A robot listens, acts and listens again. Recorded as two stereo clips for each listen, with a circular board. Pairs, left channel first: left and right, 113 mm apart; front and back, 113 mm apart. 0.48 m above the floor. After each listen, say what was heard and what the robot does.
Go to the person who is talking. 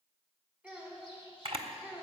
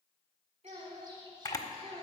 The child speaking: 170° right. Turn 170° right.
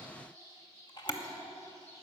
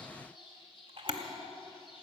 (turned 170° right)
Keep listening.
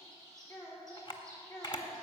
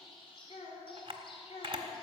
The child speaking is now 25° left. Turn 25° left.
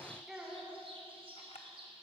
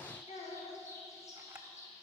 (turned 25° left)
Drive 1.0 m forward.
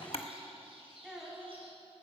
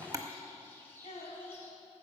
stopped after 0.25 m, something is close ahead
Something is in my way. I am facing the child speaking but have not reached it.